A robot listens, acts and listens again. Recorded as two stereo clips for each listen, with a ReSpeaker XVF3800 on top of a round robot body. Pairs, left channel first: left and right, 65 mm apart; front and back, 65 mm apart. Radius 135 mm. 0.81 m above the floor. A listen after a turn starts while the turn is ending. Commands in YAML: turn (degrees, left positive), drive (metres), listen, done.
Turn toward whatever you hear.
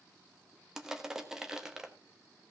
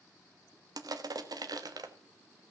turn: -170
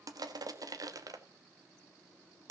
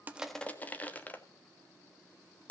turn: -65
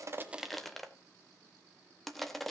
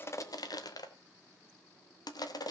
done: "Found it: crushing, straight ahead."